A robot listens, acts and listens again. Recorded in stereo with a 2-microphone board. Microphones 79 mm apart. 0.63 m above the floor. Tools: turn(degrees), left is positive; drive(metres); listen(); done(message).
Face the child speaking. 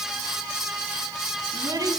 turn(degrees=-55)
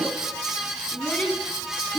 turn(degrees=15)
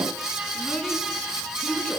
turn(degrees=10)
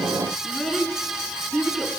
done("Facing the child speaking.")